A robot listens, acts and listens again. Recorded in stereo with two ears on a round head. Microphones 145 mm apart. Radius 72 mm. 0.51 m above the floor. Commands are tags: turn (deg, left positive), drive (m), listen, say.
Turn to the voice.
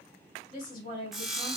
<turn deg="35"/>
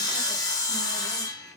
<listen/>
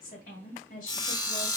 <turn deg="115"/>
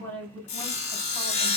<turn deg="15"/>
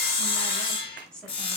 <say>Facing the woman speaking, 2 to 4 m away.</say>